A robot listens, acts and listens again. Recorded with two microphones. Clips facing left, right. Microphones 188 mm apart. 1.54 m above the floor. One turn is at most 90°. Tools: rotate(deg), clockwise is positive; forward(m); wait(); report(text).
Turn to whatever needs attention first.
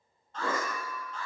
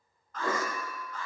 rotate(-30)
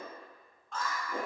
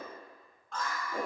report("Facing the alarm.")